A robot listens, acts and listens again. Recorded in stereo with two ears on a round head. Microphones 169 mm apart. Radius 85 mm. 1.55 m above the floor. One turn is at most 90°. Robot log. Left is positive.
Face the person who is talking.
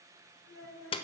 cmd yaw +90
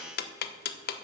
cmd idle
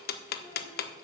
cmd idle
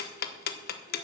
end: Facing where the child speaking came from. I can't hear it now.